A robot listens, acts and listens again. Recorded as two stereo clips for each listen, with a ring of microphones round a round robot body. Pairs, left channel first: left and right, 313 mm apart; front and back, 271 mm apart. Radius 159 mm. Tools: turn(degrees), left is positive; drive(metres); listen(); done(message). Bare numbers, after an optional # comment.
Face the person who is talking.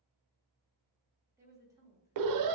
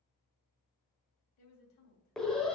# The woman speaking: 10° right.
turn(-10)
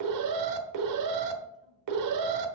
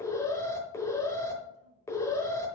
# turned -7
listen()
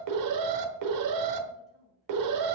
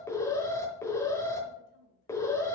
done("Facing the woman speaking, 2 to 4 m away.")